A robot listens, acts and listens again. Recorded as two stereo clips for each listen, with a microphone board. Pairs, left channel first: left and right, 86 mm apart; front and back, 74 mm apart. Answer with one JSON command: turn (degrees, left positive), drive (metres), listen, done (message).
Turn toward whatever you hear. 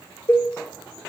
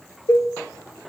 {"turn": 35}
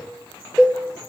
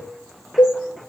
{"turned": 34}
{"done": "Facing the cowbell, under 1 m away."}